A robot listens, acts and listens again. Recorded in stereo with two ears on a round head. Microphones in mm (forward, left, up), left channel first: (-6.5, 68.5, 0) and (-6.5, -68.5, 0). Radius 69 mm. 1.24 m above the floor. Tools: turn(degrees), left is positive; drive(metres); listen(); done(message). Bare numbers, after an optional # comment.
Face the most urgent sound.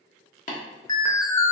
# The alarm: about 25° left or 155° left.
turn(25)
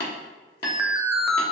done("Facing the alarm.")